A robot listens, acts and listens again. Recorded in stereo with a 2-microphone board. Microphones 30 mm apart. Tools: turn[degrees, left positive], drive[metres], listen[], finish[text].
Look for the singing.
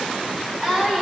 Thought: The singing: about 20° right or 160° right.
Action: turn[-20]
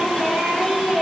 Thought: The singing: about 25° right or 155° right.
Action: turn[-25]
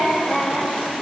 Thought: So it is at 140° right.
Action: turn[-140]
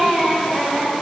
Thought: The singing is now 20° left.
Action: turn[20]
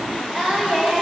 Thought: The singing is now 10° left.
Action: turn[10]
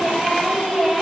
Action: finish[Facing the singing, 2 to 4 m away.]